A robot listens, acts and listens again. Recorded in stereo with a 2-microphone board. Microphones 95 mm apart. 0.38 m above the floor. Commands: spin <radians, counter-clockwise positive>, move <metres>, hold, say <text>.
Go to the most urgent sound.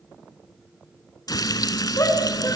spin 0.52
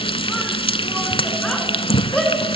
move 1.0
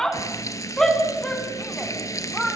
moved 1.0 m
move 1.0
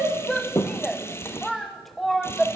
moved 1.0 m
move 1.0
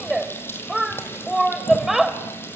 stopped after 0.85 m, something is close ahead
say Arrived at the shout, straight ahead.